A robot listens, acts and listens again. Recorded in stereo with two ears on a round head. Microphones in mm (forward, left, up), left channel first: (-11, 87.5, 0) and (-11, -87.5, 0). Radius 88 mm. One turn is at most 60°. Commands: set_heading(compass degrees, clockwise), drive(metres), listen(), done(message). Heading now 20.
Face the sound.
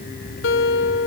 set_heading(320)
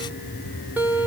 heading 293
set_heading(303)
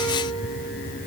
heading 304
listen()
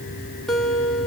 done("Facing the guitar, 1 to 2 m away.")